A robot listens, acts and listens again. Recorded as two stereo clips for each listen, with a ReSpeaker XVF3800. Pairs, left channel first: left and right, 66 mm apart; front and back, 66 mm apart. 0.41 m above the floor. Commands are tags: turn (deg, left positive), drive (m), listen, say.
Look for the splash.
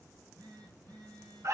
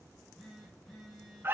<listen/>
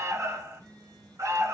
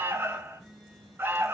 <listen/>
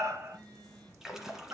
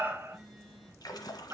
<say>Facing the splash.</say>